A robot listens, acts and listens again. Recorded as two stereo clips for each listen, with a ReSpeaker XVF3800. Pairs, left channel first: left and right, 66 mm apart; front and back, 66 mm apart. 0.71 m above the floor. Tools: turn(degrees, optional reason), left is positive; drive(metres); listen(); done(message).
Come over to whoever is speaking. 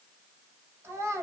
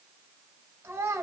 turn(degrees=-140, reason="The child speaking: 140° right.")
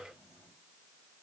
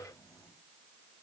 listen()
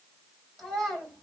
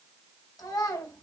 drive(metres=1.0)
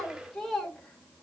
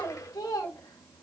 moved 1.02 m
drive(metres=1.0)
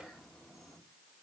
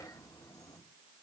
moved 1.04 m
listen()
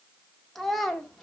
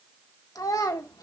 drive(metres=1.0)
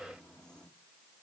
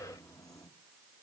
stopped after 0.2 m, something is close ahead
listen()
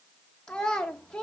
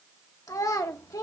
turn(degrees=15, reason="The child speaking is now 15° left.")
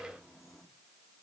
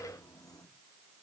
listen()
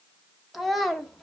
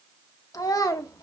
done("Arrived at the child speaking, straight ahead.")